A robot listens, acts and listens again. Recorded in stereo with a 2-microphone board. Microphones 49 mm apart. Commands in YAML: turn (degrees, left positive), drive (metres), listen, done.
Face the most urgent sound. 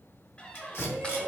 turn: -40
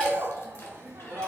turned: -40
turn: -95
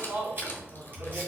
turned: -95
turn: -30
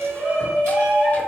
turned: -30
turn: -15
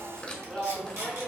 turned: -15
done: "Facing the shout."